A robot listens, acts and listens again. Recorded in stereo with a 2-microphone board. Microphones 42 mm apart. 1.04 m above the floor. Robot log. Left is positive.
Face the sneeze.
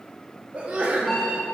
note: The sneeze: about 30° right or 150° right.
cmd yaw -30
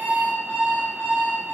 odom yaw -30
cmd idle
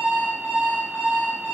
end: I heard a sneeze, but can't make it out now. It was about straight ahead or 120° right.